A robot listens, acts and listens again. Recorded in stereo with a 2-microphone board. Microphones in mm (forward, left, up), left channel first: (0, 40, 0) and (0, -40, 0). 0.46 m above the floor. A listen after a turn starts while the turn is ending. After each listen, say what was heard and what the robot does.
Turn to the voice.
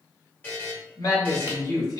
The man speaking: about 55° left or 125° left. Turn 55° left.
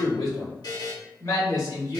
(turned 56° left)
So it is at 50° left. Turn 50° left.
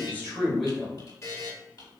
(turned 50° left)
Facing the man speaking, 1 to 2 m away.